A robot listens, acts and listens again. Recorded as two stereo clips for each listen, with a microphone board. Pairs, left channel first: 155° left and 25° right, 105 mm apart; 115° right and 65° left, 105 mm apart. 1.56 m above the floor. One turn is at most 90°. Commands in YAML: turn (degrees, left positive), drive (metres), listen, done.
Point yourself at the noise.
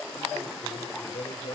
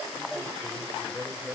turn: 90
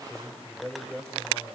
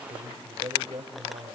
turn: 75
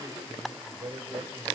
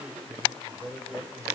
done: "Facing the man speaking."